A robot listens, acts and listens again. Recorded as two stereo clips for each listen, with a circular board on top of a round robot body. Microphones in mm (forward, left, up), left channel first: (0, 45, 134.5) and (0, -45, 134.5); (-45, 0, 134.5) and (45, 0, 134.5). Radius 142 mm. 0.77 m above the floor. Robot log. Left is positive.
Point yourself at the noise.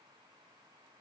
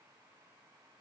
cmd idle
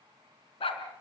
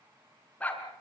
note: The dog barking: 105° left.
cmd yaw +105
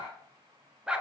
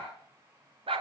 note: The dog barking is now 10° right.
cmd yaw -10
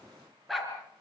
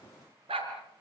end: Facing the dog barking, over 4 m away.